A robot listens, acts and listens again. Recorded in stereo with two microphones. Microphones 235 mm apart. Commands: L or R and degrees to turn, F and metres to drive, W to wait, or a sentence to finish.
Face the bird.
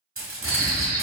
L45
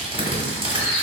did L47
Found it: a bird, straight ahead.